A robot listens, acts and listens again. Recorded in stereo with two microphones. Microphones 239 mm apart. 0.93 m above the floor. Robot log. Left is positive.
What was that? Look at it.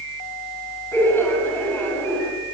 cmd yaw +30
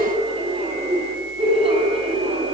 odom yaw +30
note: So it is at 25° right.
cmd yaw -25
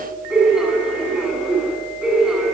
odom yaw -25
end: Found it: laughter, straight ahead.